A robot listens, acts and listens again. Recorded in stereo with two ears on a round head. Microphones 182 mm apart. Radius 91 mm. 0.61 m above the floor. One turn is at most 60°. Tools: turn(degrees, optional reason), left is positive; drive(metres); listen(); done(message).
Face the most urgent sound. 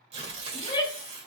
turn(degrees=20, reason="The shout: about 20° left or 160° left.")
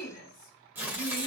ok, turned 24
turn(degrees=60, reason="So it is at 130° left.")
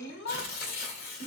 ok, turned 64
turn(degrees=60, reason="The shout is now 70° left.")
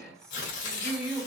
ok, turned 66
done("Facing the shout.")